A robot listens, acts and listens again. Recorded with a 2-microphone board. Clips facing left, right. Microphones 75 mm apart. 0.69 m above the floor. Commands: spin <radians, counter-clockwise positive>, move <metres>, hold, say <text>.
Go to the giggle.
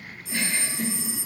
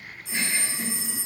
spin -0.52
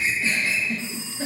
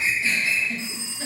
spin 0.26
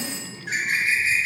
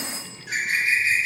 hold
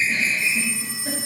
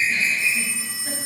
hold
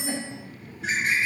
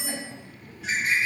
move 1.0
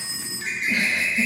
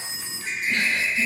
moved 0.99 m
spin 0.26
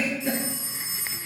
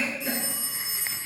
move 1.0
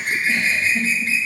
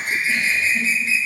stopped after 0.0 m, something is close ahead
say I am next to the giggle.